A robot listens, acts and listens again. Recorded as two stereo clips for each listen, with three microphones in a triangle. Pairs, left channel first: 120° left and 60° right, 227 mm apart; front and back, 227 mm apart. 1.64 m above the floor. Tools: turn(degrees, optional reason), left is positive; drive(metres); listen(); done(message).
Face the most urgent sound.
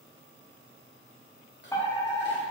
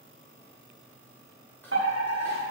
turn(degrees=-165, reason="The fire alarm: 165° right.")
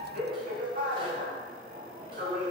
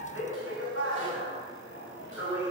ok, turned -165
turn(degrees=-10, reason="The fire alarm is now 10° right.")
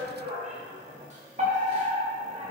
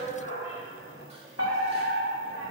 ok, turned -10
done("Found it: a fire alarm, straight ahead, over 4 m away.")